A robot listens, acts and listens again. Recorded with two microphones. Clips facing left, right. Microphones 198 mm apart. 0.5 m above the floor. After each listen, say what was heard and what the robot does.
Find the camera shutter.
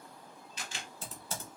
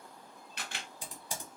The camera shutter: about 60° right or 120° right. Turn 60° right.
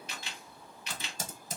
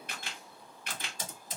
So it is at 55° right. Turn 55° right.
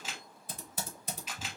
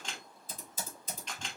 Facing the camera shutter, under 1 m away.